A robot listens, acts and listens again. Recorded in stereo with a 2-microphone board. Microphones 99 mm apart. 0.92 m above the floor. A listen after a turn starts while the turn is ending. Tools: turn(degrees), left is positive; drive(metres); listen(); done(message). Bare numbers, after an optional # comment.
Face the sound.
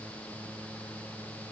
listen()
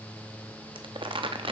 # The crumpling: about 60° right or 120° right.
turn(-60)
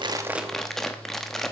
done("Facing the crumpling, under 1 m away.")